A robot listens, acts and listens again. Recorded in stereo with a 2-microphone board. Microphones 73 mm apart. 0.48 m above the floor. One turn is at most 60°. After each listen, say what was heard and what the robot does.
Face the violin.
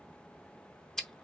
Keep listening.
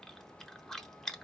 Keep listening.
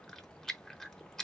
I can't make out a violin to turn to.